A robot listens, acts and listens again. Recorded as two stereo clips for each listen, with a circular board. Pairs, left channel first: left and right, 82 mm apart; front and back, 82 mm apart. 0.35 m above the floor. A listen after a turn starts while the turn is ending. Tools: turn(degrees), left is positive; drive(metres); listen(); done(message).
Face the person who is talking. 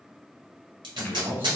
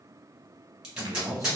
turn(degrees=-145)
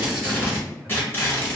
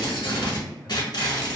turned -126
turn(degrees=-20)
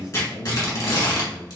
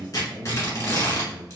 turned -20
done("Found it: a man speaking, straight ahead, 1 to 2 m away.")